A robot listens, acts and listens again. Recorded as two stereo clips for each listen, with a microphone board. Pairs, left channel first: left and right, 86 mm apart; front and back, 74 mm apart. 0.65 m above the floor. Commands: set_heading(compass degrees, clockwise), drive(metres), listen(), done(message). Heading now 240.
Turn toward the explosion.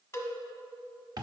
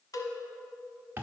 listen()
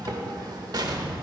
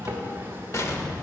set_heading(290)
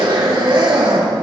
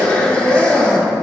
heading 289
done("Facing where the explosion came from. I can't hear it now.")